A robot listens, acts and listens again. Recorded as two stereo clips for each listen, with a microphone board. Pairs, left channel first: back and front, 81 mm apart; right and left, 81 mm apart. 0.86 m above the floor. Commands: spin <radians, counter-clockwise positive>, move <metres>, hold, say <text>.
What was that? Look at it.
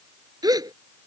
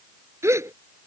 spin 0.61
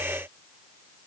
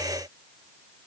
say I heard a gasp from this way, but can't make it out now.